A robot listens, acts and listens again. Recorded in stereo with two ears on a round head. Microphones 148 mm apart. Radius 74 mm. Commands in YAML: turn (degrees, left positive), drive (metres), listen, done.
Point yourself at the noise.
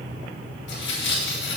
turn: 90
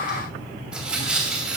done: "Found it: tearing paper, straight ahead."